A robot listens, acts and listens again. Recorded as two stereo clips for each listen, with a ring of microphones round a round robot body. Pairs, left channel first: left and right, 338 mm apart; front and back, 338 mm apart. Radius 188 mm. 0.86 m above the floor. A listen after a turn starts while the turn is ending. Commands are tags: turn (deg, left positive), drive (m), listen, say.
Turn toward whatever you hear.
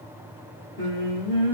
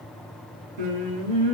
<turn deg="-165"/>
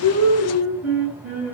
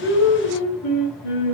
<say>Found it: singing, straight ahead, 2 to 4 m away.</say>